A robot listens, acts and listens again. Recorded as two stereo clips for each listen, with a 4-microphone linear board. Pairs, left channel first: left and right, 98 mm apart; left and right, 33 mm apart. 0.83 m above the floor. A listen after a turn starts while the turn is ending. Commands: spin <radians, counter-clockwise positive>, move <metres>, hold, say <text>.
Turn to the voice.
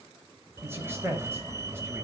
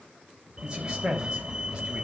spin -0.44
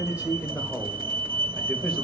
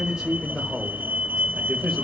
say Facing the man speaking.